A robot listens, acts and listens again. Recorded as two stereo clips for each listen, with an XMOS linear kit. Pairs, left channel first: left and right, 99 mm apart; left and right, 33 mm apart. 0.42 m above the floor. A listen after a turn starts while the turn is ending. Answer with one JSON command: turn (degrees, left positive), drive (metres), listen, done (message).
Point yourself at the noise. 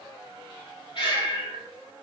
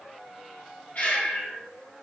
{"turn": 60}
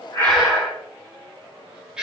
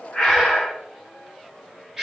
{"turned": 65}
{"turn": -10}
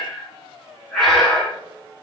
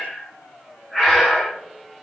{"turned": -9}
{"done": "Facing the breathing."}